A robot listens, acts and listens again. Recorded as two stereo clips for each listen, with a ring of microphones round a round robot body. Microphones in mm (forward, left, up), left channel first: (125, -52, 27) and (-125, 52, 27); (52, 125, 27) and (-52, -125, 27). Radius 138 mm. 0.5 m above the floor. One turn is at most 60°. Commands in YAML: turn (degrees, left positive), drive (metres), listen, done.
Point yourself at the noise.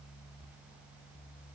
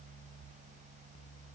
listen: true
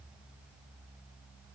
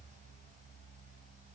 listen: true
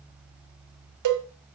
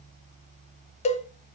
turn: 60
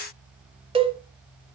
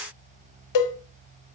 turn: 60
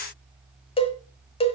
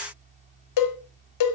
turn: 50
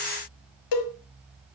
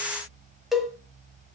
turn: -25
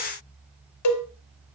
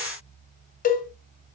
done: "Facing the cowbell."